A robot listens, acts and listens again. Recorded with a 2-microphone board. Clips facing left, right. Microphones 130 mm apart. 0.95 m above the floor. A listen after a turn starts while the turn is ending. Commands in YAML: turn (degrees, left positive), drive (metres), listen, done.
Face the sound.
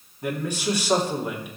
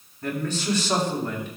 turn: 30
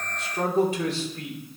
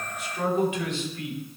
turn: 145
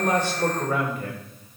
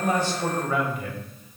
turn: 45
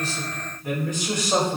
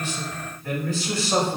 turn: 20
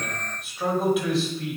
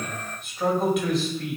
done: "Found it: a man speaking, straight ahead."